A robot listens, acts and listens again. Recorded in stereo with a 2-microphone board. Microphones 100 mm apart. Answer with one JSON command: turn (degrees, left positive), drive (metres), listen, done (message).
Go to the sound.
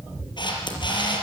{"turn": 50}
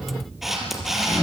{"drive": 1.0}
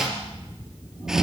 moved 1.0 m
{"listen": true}
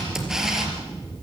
{"drive": 1.0}
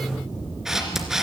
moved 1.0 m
{"drive": 1.0}
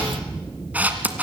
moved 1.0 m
{"turn": -15}
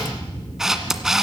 {"drive": 1.0}
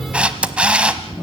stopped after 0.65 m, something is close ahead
{"turn": -10}
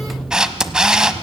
{"turn": -10}
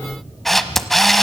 {"done": "Arrived at the camera shutter, straight ahead."}